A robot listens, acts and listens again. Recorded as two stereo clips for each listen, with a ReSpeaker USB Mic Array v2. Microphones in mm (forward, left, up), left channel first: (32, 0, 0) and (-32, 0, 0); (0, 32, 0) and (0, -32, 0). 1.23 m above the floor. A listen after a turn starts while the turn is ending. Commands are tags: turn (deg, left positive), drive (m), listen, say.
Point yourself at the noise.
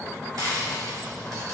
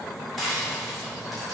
<turn deg="180"/>
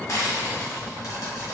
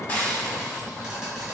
<turn deg="-15"/>
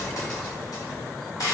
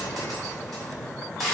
<say>Found it: frying, straight ahead, 1 to 2 m away.</say>